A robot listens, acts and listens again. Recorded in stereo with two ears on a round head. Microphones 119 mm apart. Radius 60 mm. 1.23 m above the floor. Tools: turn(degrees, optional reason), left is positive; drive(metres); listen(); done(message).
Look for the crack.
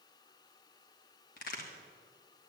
turn(degrees=65, reason="The crack: about 65° left or 115° left.")
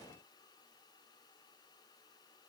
listen()
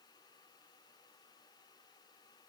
done("I heard a crack, but can't make it out now. It was about straight ahead or 50° left.")